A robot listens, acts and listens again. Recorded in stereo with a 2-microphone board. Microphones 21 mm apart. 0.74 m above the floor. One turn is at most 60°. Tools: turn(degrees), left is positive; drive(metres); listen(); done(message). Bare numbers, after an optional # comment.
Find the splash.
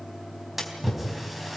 turn(-30)
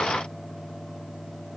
listen()
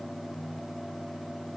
done("I heard a splash, but can't make it out now. It was about 20° left or 140° right.")